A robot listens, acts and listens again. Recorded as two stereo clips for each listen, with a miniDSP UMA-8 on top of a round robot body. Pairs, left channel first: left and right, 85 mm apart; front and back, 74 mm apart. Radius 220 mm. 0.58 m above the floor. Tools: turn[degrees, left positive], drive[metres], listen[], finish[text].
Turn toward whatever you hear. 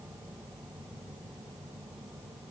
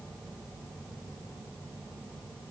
Action: listen[]
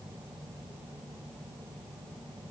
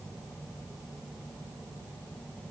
Action: listen[]
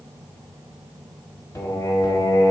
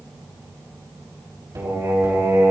Thought: The singing: 140° left.
Action: turn[140]
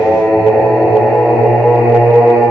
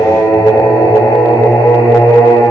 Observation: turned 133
Action: finish[Facing the singing.]